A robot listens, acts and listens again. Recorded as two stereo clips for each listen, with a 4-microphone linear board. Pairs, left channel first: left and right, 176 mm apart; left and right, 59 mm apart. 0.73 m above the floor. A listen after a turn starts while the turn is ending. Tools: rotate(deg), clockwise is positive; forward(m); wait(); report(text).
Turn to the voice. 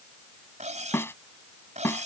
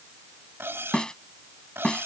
wait()
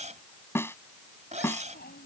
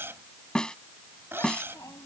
rotate(-65)
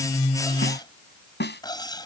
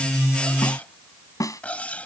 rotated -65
wait()
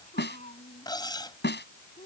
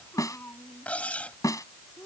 rotate(-40)
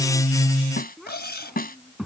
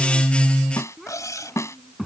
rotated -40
report("Found it: a child speaking, straight ahead.")